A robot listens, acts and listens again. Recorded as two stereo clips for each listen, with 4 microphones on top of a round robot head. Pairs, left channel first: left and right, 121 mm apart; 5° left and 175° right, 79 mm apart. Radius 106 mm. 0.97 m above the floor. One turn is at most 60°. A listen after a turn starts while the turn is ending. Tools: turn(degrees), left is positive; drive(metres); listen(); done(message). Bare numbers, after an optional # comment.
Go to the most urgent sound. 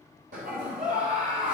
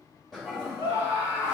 # The scream: 125° right.
turn(-60)
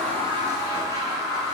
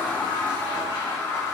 # The scream is now 65° right.
turn(-60)
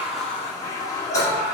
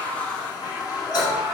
# The scream is now 10° right.
turn(-10)
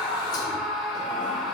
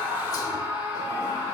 drive(1.0)
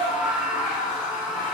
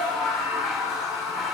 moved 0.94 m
drive(1.0)
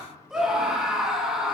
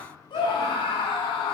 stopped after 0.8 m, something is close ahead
done("I am next to the scream.")